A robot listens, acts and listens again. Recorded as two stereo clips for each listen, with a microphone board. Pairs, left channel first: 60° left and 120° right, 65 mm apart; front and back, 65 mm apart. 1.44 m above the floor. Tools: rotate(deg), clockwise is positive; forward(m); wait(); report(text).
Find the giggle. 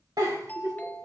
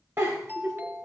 rotate(130)
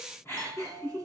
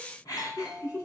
rotate(-15)
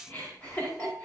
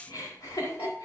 report("Found it: a giggle, straight ahead.")